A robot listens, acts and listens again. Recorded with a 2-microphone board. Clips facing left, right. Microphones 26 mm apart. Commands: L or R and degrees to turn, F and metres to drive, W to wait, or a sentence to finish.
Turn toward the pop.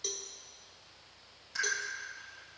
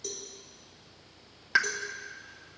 R60
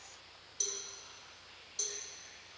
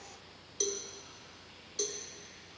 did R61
W
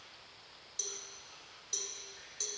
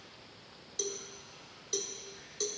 I heard a pop, but can't make it out now. It was about straight ahead or 60° right.